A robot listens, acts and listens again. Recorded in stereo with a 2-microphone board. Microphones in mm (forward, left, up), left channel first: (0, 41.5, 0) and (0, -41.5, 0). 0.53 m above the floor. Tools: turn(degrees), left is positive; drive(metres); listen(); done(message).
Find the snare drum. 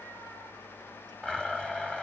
listen()
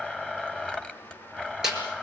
turn(degrees=-30)
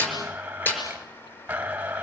turn(degrees=25)
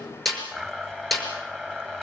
done("Found it: a snare drum, straight ahead.")